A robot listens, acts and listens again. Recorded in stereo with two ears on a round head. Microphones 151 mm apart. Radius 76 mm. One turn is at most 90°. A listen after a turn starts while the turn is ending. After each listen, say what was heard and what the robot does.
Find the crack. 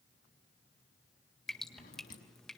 Keep listening.
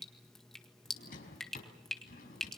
Keep listening.
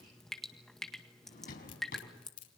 Turn 90° left.
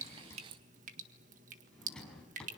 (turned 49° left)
Nothing new. It was at 40° left. Turn 40° left.
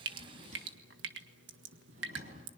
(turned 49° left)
Nothing new. It was at 10° right. Turn 10° right.
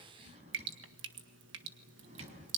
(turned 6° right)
Facing where the crack came from. I can't hear it now.